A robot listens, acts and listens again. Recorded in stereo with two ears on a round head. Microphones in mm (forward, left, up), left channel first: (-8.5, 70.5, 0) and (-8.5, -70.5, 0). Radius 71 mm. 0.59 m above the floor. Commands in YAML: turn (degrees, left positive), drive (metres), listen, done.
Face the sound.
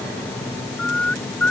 turn: 30
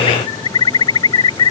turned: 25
turn: 150
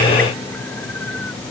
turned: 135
turn: 15
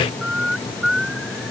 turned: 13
done: "Facing the bird."